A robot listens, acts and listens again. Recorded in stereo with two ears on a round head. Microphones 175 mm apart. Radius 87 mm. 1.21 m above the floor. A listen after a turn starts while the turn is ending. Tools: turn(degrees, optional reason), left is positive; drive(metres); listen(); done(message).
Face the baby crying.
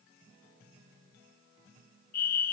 listen()
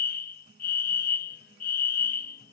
listen()
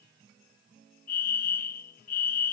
done("I can't make out a baby crying, only a fire alarm.")